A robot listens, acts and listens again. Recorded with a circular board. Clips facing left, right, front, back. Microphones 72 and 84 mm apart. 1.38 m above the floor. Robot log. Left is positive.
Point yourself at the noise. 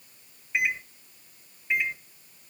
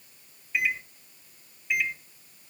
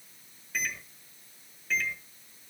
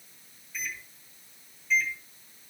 note: The microwave: 30° left.
cmd yaw +30
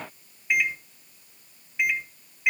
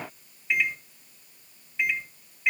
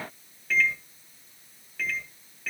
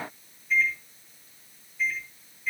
note: The microwave is now 10° left.
cmd yaw +10
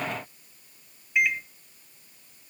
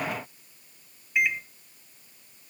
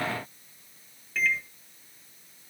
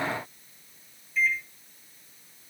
end: Found it: a microwave, straight ahead, 1 to 2 m away.